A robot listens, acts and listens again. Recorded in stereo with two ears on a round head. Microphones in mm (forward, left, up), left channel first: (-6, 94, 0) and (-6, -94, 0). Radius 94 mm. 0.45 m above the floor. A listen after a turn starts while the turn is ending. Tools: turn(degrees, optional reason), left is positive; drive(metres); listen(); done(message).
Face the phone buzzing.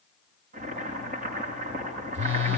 turn(degrees=-60, reason="The phone buzzing: about 60° right or 120° right.")
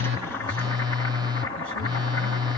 turn(degrees=-25, reason="So it is at 25° right.")
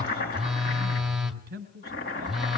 done("Facing the phone buzzing, 1 to 2 m away.")